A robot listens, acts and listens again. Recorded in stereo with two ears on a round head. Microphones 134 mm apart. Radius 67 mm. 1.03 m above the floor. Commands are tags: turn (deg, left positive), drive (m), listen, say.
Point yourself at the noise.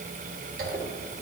<turn deg="-60"/>
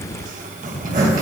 <turn deg="-55"/>
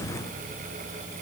<listen/>
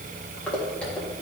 <turn deg="10"/>
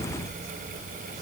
<listen/>
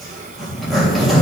<say>Facing the zipper.</say>